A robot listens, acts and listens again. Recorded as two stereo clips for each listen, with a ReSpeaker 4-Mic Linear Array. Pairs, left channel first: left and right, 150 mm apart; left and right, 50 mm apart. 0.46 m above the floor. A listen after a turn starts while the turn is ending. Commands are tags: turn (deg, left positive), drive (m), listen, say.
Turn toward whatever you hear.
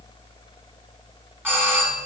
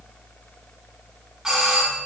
<turn deg="-30"/>
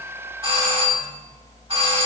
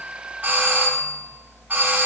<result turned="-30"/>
<turn deg="-135"/>
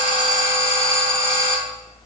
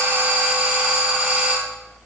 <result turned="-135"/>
<turn deg="-25"/>
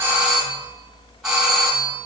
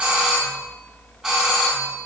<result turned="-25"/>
<say>Facing the doorbell, 2 to 4 m away.</say>